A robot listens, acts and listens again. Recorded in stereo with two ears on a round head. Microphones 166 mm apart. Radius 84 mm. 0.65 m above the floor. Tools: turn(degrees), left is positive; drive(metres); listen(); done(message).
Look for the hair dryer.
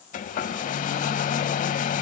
turn(degrees=45)
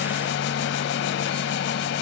turn(degrees=90)
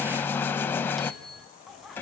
turn(degrees=10)
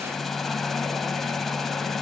done("Found it: a hair dryer, straight ahead, under 1 m away.")